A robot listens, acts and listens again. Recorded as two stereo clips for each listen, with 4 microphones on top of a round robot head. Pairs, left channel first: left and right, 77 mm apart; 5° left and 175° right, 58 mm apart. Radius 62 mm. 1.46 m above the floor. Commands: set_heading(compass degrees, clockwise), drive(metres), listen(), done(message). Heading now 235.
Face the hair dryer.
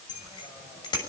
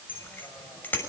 listen()
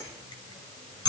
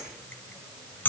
listen()
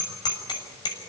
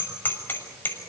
done("I can't make out a hair dryer to turn to.")